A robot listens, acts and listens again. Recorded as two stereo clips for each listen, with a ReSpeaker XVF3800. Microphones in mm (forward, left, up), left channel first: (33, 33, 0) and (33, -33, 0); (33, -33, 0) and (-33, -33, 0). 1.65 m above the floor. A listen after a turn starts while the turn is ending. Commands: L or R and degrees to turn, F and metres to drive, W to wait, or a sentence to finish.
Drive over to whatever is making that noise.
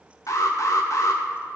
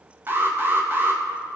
L125
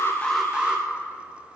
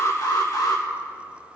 R15
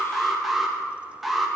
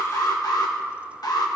F1.0
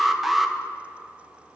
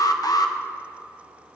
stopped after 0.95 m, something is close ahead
I am next to the alarm.